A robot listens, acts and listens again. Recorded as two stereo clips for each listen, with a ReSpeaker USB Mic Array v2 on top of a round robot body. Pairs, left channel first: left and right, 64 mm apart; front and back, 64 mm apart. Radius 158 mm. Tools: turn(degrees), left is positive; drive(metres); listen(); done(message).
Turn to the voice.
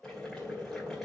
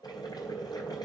listen()
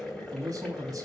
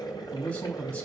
turn(degrees=-60)
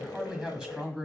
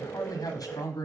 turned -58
done("Facing the man speaking, 2 to 4 m away.")